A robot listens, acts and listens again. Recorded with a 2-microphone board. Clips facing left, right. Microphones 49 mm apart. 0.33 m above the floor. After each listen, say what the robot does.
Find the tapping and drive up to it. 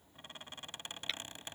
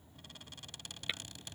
Turn 30° right.
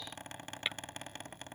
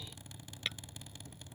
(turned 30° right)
Turn 20° left.
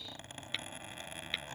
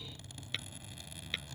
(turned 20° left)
Drive 1.0 m forward.
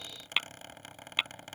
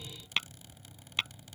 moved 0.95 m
Turn 15° left.
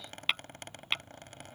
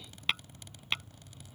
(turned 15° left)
Drive 1.0 m forward.
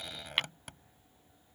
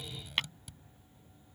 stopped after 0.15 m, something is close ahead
Turn 10° left.
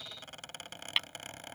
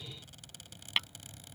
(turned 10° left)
I am next to the tapping.